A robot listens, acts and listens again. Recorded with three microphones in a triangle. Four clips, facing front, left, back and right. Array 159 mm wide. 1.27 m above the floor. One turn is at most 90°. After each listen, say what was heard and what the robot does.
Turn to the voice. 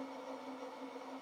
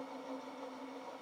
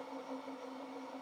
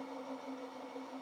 Keep listening.
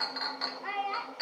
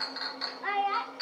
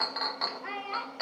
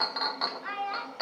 The child speaking: 90° left. Turn 90° left.
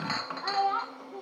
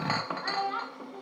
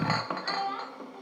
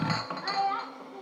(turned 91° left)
Found it: a child speaking, straight ahead, 1 to 2 m away.